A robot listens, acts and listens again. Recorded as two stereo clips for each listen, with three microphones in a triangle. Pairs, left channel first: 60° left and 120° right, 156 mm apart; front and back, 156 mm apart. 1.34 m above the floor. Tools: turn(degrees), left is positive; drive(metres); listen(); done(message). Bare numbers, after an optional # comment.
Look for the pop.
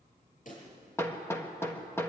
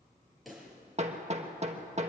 # The pop: 90° left.
turn(90)
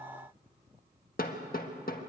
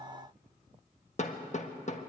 done("Facing where the pop came from. I can't hear it now.")